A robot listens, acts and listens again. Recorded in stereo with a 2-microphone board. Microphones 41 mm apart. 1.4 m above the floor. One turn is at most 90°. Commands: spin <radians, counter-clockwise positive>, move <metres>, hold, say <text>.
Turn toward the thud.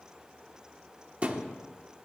spin -0.52
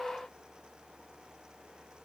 hold
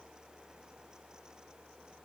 say I heard a thud, but can't make it out now. It was about straight ahead or 120° right.